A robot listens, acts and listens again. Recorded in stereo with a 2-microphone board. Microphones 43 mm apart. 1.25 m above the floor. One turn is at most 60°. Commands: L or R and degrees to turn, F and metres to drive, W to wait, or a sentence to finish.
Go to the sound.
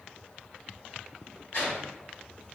L60
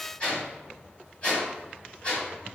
L35
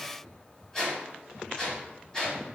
L15
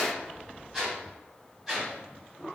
F1.0
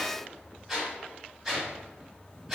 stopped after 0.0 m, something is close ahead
R10
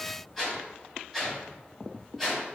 Blocked. The whoosh is further on, straight ahead.